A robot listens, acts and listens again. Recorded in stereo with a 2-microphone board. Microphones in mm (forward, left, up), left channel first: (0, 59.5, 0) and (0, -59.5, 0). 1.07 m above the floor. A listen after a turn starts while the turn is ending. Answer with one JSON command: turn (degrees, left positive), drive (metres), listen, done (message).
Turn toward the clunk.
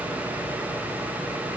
{"listen": true}
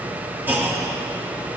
{"turn": -15}
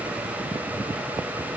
{"listen": true}
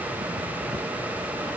{"done": "I heard a clunk, but can't make it out now. It was about straight ahead or 150° right."}